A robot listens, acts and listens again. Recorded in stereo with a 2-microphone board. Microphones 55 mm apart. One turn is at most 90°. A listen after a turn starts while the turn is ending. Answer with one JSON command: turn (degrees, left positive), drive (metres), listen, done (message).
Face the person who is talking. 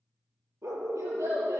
{"turn": -90}
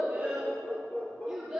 {"turn": -10}
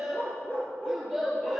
{"done": "Found it: a child speaking, straight ahead."}